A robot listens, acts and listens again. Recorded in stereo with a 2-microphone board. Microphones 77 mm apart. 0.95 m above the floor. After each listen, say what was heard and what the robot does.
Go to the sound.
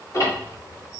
The ticking: about 45° left or 135° left. Turn 45° left.
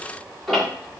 Drive 1.0 m forward.
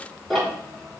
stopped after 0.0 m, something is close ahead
Blocked. The ticking is further on, straight ahead.